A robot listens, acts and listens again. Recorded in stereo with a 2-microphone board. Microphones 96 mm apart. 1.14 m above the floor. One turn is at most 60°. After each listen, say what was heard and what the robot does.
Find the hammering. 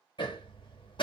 The hammering: about 55° left or 125° left. Turn 55° left.
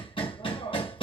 So it is at 65° left. Turn 60° left.
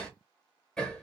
Facing the hammering.